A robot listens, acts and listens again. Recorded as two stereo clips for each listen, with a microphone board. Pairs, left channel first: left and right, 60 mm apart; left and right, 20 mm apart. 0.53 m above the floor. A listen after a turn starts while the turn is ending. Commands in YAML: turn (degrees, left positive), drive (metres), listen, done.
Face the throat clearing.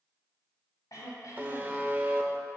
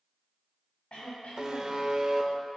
turn: 90
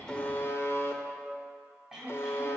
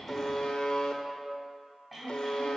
turn: -10
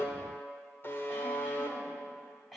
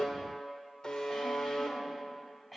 done: "Found it: throat clearing, straight ahead."